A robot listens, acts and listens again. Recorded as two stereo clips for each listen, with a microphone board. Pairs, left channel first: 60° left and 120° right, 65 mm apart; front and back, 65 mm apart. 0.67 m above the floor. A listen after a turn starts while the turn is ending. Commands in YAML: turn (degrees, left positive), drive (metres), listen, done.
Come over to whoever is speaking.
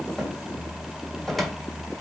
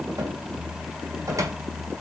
listen: true
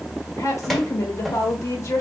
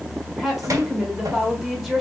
turn: 90
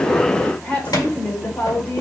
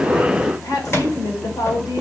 turn: -10
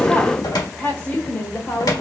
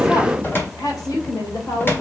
drive: 1.0
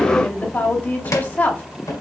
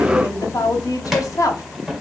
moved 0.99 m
drive: 1.0
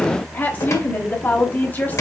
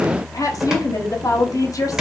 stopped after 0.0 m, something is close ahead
done: "Arrived at the woman speaking, straight ahead."